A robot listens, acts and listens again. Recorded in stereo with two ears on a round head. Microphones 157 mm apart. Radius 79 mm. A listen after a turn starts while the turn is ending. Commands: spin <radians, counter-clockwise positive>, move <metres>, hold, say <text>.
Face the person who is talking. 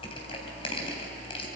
hold
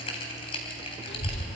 spin 1.13
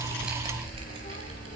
spin 0.87
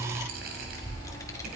spin 0.35
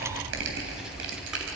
say Found it: a child speaking, straight ahead.